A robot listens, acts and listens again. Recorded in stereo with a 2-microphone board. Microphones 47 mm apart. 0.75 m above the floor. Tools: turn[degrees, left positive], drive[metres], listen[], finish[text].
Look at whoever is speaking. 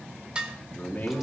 Thought: The man speaking: about 35° left or 145° left.
Action: turn[35]
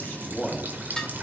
Action: finish[Found it: a man speaking, straight ahead.]